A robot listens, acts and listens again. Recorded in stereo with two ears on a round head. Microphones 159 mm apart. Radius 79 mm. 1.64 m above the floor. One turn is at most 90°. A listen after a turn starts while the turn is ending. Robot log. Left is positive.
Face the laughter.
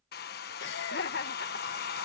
note: The laughter: about 65° left or 115° left.
cmd yaw +65
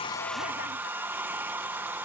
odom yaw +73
cmd idle
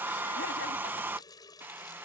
cmd idle
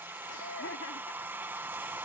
note: So it is at 75° left.
cmd yaw +75
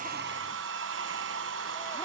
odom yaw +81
cmd idle
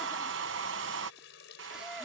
cmd idle
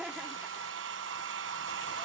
end: Facing the laughter.